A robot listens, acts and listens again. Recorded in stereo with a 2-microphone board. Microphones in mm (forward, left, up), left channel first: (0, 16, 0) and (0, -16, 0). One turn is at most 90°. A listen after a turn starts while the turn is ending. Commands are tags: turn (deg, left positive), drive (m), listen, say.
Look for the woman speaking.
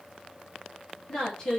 <turn deg="30"/>
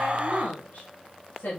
<turn deg="90"/>
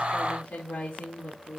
<turn deg="60"/>
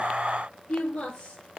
<turn deg="15"/>
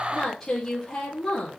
<say>Facing the woman speaking, 2 to 4 m away.</say>